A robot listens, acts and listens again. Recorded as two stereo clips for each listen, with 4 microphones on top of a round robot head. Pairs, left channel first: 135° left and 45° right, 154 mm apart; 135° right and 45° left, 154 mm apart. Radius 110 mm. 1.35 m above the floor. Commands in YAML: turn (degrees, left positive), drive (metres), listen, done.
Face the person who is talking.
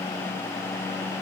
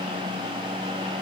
listen: true
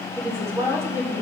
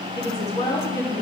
turn: -120
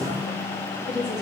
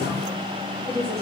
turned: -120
turn: -45
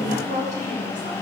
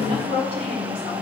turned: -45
done: "Found it: a woman speaking, straight ahead."